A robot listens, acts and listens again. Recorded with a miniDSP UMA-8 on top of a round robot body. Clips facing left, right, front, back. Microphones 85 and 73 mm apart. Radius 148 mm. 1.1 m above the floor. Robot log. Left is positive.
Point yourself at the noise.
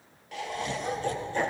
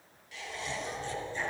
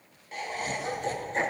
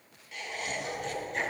note: The laughter: 60° left.
cmd yaw +60
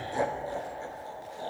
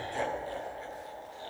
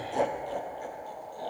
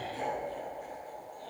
note: The laughter is now 30° left.
cmd yaw +30
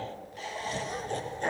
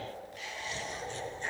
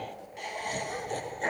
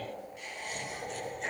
note: The laughter is now 50° left.
cmd yaw +50
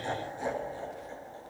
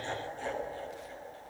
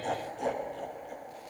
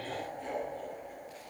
note: The laughter is now 25° left.
cmd yaw +25
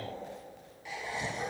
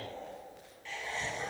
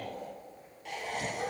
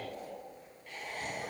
note: The laughter is now 10° left.
cmd yaw +10
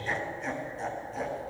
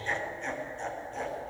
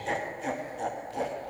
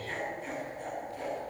end: Facing the laughter, 1 to 2 m away.